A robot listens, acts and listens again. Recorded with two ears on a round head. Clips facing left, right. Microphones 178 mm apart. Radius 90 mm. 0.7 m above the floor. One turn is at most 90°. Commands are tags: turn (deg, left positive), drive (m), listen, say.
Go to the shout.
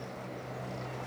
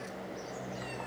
<listen/>
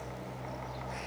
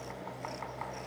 <listen/>
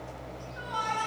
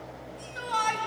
<turn deg="-90"/>
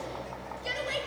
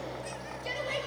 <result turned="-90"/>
<drive m="1.0"/>
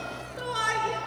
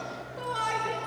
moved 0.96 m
<turn deg="15"/>
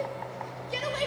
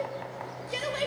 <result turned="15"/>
<drive m="1.0"/>
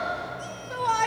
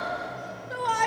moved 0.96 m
<drive m="1.0"/>
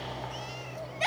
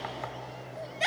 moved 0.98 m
<turn deg="-10"/>
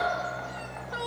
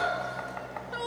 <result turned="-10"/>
<drive m="1.0"/>
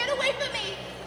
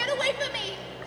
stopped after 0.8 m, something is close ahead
<say>Arrived at the shout, straight ahead.</say>